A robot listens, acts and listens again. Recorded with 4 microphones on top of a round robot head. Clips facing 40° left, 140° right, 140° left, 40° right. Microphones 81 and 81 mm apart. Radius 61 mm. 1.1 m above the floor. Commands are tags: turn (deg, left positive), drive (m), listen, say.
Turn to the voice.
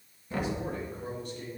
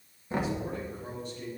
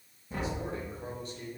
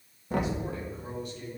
<turn deg="80"/>
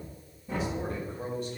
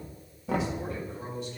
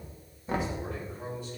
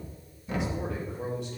<turn deg="-10"/>
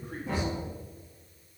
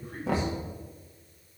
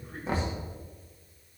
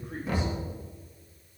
<say>Found it: a man speaking, straight ahead, 2 to 4 m away.</say>